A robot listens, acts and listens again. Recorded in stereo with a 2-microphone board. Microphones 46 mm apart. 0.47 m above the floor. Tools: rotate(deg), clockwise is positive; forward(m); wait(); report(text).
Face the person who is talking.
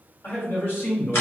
rotate(-50)
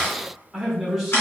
report("Found it: a man speaking, straight ahead.")